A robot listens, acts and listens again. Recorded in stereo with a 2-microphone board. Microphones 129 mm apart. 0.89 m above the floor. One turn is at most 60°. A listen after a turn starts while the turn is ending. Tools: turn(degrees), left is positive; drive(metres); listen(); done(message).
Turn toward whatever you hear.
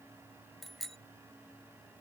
turn(degrees=30)
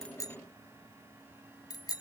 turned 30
turn(degrees=60)
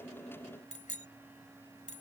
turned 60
turn(degrees=60)
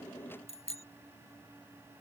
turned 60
turn(degrees=55)
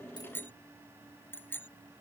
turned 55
turn(degrees=15)
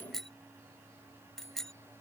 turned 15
done("Found it: a bicycle bell, straight ahead.")